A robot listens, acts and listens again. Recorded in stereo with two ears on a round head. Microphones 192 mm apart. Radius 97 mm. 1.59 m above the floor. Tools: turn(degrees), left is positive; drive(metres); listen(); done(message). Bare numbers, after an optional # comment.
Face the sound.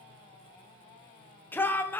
turn(30)
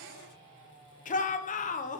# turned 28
# So it is at 140° left.
turn(140)
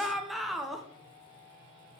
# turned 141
done("Facing the shout.")